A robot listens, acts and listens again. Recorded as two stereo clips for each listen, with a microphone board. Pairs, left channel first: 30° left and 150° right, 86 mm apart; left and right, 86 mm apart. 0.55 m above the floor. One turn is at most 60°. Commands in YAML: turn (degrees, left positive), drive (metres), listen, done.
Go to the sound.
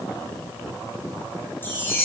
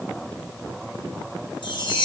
turn: 60
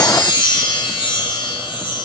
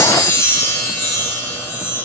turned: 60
turn: 30
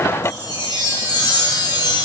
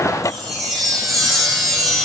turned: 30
drive: 1.0
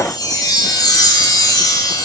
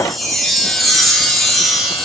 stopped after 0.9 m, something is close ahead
done: "Arrived at the chime, straight ahead."